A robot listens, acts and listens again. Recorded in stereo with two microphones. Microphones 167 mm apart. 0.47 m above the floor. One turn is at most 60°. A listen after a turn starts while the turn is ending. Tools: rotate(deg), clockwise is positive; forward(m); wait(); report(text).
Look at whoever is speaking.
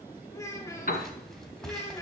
rotate(-20)
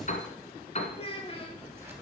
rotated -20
rotate(-60)
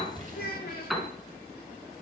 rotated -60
rotate(-60)
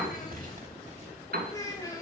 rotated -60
rotate(-25)
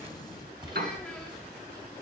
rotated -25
wait()
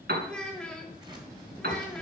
report("Found it: a child speaking, straight ahead.")